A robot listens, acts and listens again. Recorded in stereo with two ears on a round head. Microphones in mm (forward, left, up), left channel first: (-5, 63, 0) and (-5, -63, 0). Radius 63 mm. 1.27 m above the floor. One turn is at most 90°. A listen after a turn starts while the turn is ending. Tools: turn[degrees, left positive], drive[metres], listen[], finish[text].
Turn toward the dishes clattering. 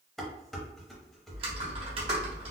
Action: turn[30]
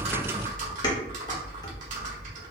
Action: listen[]
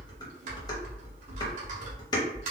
Thought: So it is at 150° left.
Action: turn[90]
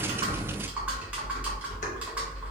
Thought: Nothing new. It was at 60° left.
Action: turn[60]
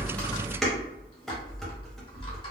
Action: finish[Facing the dishes clattering.]